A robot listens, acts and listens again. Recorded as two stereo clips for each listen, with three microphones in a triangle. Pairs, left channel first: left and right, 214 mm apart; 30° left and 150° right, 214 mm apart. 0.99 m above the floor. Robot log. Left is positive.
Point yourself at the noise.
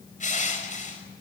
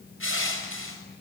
note: The crushing: 35° left.
cmd yaw +35
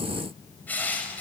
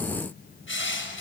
note: The crushing is now 10° left.
cmd yaw +10
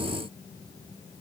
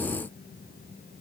cmd idle
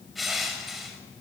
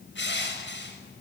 end: Found it: crushing, straight ahead, over 4 m away.